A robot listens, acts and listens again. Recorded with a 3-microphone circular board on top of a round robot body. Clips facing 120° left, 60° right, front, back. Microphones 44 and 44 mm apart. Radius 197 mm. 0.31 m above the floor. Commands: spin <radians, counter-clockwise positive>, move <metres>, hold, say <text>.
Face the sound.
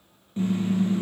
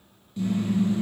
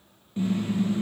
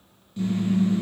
spin 1.05
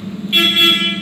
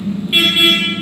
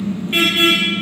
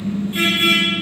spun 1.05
spin 0.35
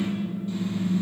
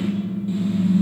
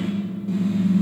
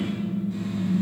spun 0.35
say Facing the car horn.